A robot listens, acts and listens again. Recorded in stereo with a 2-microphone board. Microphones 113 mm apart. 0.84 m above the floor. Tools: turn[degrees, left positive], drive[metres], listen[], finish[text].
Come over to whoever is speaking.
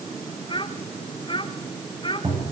Thought: The child speaking: about 40° left or 140° left.
Action: turn[40]
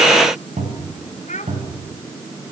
Thought: So it is at 95° left.
Action: turn[95]
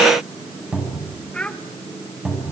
Thought: The child speaking is now 10° left.
Action: turn[10]
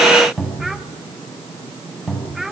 Action: drive[1.0]
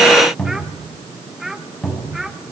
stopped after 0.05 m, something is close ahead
Action: finish[Something is in my way. I am facing the child speaking but have not reached it.]